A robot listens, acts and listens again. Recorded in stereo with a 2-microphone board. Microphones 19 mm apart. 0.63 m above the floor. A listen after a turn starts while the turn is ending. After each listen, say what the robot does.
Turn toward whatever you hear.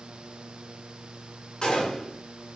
Turn 45° left.
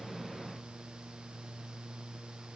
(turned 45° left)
Keep listening.
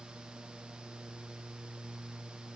I heard a gunshot, but can't make it out now. It was about straight ahead or 90° left.